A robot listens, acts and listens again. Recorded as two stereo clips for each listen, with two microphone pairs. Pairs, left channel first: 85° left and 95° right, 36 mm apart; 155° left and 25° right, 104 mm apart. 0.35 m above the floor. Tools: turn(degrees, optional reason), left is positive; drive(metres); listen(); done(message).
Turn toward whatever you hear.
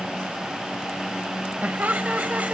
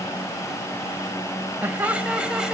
turn(degrees=-100, reason="The laughter: 100° right.")
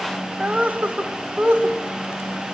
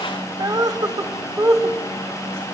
turn(degrees=-75, reason="The laughter is now 75° right.")
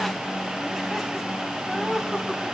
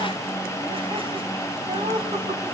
turn(degrees=-20, reason="The laughter is now 20° right.")
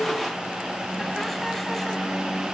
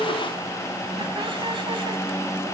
listen()
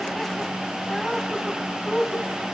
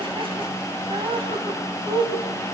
done("Found it: laughter, straight ahead.")